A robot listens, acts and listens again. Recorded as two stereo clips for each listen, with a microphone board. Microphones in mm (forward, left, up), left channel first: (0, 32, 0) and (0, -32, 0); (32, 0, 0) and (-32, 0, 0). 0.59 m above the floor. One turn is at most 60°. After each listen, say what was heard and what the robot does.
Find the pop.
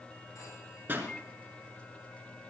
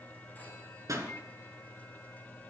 The pop: 145° right. Turn 60° right.
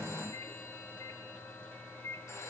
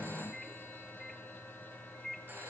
Nothing new. It was at 85° right. Turn 60° right.
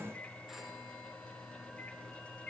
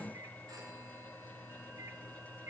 Nothing new. It was at 25° right. Turn 25° right.
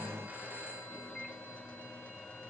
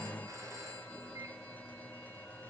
I heard a pop from this way, but can't make it out now.